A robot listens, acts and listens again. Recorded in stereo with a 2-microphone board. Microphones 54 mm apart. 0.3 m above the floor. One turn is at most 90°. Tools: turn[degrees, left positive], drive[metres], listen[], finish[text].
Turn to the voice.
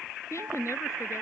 Thought: The woman speaking: about 60° left or 120° left.
Action: turn[60]
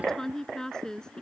Thought: So it is at 15° left.
Action: turn[15]
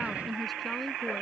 Action: listen[]
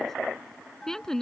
Thought: The woman speaking is now 10° left.
Action: turn[10]
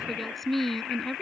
Action: finish[Found it: a woman speaking, straight ahead.]